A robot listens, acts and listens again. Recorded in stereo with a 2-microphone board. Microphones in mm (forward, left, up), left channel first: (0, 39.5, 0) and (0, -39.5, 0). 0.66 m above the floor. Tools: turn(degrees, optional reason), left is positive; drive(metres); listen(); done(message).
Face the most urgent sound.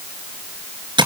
listen()
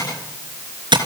listen()
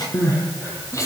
turn(degrees=40, reason="The crying: about 40° left or 140° left.")
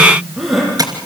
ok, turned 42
done("Found it: crying, straight ahead.")